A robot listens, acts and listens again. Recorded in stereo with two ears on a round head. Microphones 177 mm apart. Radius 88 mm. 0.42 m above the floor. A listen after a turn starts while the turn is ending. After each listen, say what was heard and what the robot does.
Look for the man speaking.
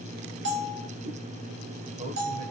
The man speaking: about 30° right or 150° right. Turn 30° right.
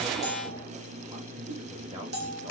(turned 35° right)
The man speaking: about 30° right or 150° right. Turn 30° right.
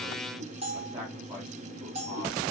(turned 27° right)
The man speaking: about 20° right or 160° right. Turn 20° right.
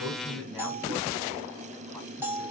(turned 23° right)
Keep listening.
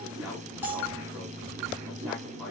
Found it: a man speaking, straight ahead, 2 to 4 m away.